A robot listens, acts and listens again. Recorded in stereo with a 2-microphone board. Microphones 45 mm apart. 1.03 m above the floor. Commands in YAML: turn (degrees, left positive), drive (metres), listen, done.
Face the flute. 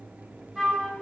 turn: 30
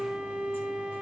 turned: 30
turn: -25
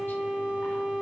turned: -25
turn: -20
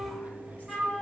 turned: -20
done: "Facing the flute."